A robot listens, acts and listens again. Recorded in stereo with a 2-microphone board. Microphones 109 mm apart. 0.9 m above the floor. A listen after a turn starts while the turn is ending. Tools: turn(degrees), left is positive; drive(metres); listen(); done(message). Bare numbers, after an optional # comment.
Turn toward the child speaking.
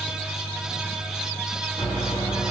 listen()
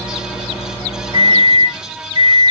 listen()
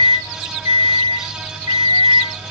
done("I can't make out a child speaking, only a microwave.")